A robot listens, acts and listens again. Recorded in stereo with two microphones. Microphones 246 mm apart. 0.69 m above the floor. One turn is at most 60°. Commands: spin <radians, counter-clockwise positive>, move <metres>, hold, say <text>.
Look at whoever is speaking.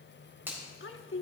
spin 0.96
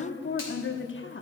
spin 1.05
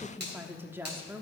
spin -0.17
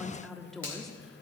say Found it: a woman speaking, straight ahead.